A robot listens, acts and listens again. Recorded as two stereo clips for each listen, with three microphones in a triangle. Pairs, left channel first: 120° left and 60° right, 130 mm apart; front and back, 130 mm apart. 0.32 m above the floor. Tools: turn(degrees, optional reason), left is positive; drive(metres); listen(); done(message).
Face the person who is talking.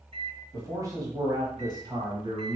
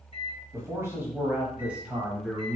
turn(degrees=-90, reason="The man speaking: 90° right.")
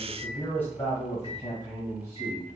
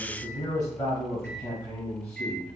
turn(degrees=75, reason="The man speaking is now 75° left.")
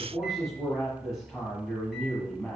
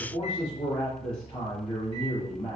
turn(degrees=30, reason="The man speaking is now 30° left.")
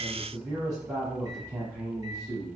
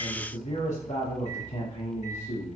done("Found it: a man speaking, straight ahead, 2 to 4 m away.")